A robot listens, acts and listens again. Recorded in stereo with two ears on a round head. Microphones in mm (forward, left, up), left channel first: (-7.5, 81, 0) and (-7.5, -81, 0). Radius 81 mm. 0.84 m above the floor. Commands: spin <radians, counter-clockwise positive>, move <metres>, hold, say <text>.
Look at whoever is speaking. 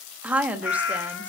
spin -0.52
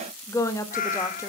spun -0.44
spin 0.35
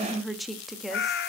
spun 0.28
say Facing the woman speaking.